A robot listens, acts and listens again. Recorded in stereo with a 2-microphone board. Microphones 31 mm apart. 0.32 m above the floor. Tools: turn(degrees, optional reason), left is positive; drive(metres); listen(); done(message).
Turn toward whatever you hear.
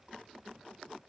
listen()
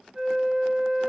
turn(degrees=-20, reason="The flute: about 20° right or 160° right.")
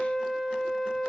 turn(degrees=-10, reason="So it is at 10° right.")
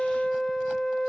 done("Found it: a flute, straight ahead.")